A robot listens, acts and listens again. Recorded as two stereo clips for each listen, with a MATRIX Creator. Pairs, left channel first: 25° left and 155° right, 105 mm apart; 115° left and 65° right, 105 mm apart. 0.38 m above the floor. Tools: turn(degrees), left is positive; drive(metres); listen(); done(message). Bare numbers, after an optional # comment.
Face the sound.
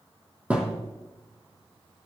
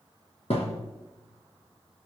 # The thud: 125° left.
turn(125)
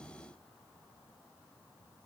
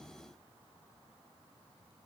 done("I heard a thud from this way, but can't make it out now.")